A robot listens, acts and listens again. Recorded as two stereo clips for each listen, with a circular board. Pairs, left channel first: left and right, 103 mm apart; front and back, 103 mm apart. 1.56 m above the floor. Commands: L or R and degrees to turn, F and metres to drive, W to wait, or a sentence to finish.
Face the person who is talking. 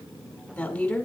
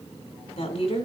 L10
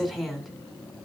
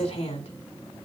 Found it: a woman speaking, straight ahead, 2 to 4 m away.